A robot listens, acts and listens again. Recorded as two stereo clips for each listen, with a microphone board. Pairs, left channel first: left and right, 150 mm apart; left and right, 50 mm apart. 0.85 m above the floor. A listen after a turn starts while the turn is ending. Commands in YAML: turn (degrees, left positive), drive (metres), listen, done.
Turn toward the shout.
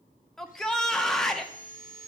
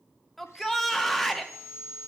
turn: 30
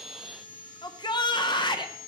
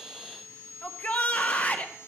turn: 145
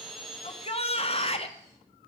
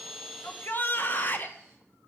turn: 45
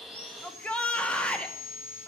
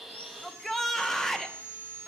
turn: 10
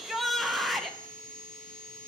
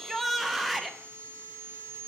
done: "Found it: a shout, straight ahead."